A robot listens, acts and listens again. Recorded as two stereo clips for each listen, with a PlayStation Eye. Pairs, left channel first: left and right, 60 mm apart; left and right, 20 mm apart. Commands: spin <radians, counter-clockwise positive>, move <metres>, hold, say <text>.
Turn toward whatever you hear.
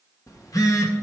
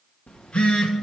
spin 1.22
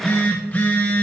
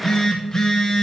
spin 0.44
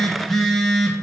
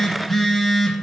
say Found it: a phone buzzing, straight ahead, 1 to 2 m away.